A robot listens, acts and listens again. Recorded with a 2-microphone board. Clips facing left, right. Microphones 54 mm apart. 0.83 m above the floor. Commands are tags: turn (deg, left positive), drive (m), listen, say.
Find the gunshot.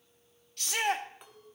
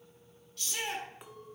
<listen/>
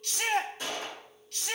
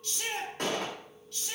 <turn deg="-55"/>
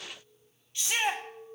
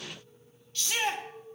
<listen/>
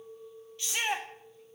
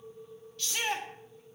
<say>I heard a gunshot, but can't make it out now. It was about straight ahead or 70° right.</say>